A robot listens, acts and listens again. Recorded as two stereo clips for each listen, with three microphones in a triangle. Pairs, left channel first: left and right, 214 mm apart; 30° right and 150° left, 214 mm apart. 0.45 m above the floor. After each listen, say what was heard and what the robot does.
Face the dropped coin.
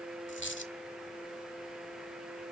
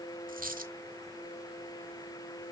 The dropped coin: 105° left. Turn 105° left.
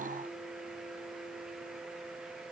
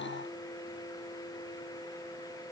I heard a dropped coin from this way, but can't make it out now.